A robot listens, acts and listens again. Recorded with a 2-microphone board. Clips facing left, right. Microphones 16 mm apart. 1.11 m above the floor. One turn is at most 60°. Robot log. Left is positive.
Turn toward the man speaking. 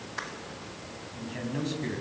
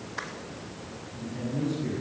note: The man speaking: about 55° left or 125° left.
cmd yaw +55
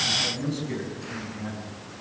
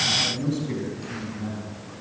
end: Facing the man speaking, over 4 m away.